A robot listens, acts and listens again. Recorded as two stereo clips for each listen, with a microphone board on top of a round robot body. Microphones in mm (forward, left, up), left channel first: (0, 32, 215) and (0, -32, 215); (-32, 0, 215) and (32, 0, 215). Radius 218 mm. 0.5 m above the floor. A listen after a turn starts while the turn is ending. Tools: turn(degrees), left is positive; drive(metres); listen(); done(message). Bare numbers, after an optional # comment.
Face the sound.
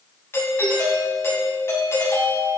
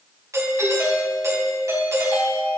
# The doorbell: 40° left.
turn(40)
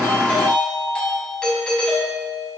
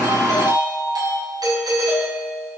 # The doorbell is now 10° left.
turn(10)
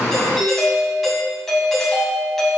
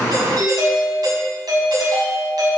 done("Facing the doorbell, over 4 m away.")